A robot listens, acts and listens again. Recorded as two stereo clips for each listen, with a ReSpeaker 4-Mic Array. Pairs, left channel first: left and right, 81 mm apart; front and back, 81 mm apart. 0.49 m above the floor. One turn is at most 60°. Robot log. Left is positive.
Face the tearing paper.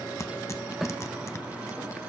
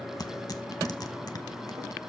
note: The tearing paper: 40° left.
cmd yaw +40
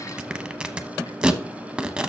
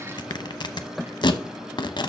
note: The tearing paper is now 15° right.
cmd yaw -15
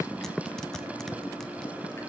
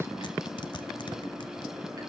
cmd idle
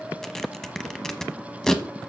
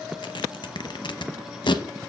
end: Facing the tearing paper, under 1 m away.